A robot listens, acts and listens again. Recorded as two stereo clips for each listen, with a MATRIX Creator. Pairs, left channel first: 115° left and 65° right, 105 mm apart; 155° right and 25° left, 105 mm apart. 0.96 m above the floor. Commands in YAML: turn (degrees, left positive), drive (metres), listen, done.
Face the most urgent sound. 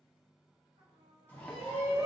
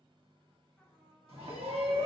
done: "Facing the shout."